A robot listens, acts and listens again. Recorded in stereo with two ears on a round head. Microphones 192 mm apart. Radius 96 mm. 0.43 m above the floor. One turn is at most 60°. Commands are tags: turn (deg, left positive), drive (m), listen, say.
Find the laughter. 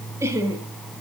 <turn deg="-15"/>
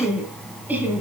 <turn deg="-30"/>
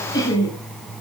<turn deg="20"/>
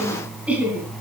<say>Found it: laughter, straight ahead.</say>